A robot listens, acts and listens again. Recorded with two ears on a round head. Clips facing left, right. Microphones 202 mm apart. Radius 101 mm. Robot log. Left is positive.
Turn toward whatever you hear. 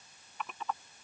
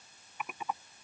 cmd yaw -30
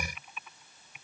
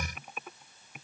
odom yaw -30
note: So it is at 140° right.
cmd yaw -140
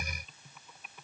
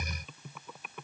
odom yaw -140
note: The typing on a keyboard is now 50° right.
cmd yaw -50
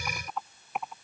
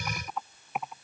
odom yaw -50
end: Found it: typing on a keyboard, straight ahead.